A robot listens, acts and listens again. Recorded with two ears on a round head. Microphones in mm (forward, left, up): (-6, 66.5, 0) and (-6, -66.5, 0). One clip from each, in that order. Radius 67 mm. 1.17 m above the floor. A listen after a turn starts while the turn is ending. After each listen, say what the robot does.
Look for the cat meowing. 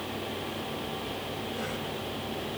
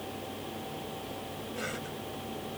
Keep listening.
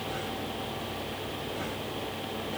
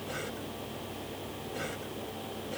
Keep listening.
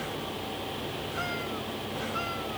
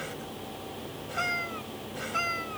Turn 55° right.
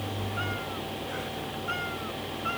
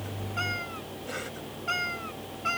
Turn 70° right.
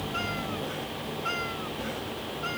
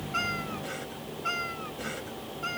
Turn 10° right.
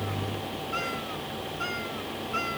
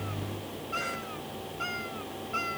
Facing the cat meowing.